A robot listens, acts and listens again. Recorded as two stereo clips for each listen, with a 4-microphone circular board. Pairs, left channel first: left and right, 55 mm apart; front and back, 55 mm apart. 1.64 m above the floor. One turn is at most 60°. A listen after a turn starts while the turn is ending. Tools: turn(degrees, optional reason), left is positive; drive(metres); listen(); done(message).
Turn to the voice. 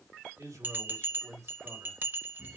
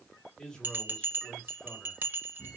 turn(degrees=-60, reason="The man speaking: 75° right.")
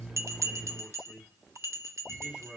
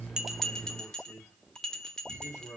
turn(degrees=-15, reason="The man speaking is now 15° right.")
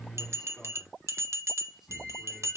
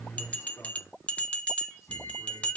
listen()
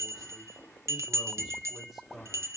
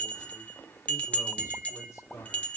done("Facing the man speaking.")